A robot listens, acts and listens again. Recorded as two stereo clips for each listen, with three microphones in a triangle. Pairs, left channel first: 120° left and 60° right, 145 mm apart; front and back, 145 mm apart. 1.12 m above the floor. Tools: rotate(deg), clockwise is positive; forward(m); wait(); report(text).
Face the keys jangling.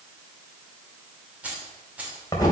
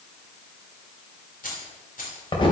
rotate(-20)
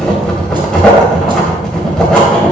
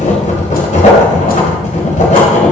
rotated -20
wait()
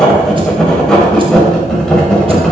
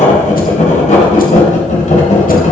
wait()
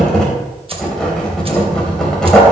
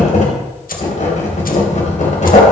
report("I heard keys jangling from this way, but can't make it out now.")